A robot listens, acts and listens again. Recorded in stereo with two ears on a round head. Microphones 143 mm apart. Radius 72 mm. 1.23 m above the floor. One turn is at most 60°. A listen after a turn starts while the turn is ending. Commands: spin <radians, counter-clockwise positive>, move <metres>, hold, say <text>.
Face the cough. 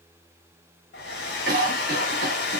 spin -1.05
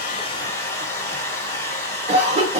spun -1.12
spin -0.70
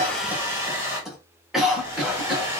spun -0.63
say Found it: a cough, straight ahead.